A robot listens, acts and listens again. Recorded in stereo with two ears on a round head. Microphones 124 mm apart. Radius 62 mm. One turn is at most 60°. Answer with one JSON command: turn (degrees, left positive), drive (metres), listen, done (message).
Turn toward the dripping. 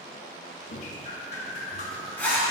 {"turn": 50}
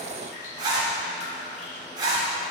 {"turn": 60}
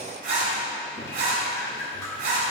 {"turn": 20}
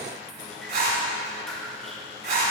{"done": "Facing the dripping, 1 to 2 m away."}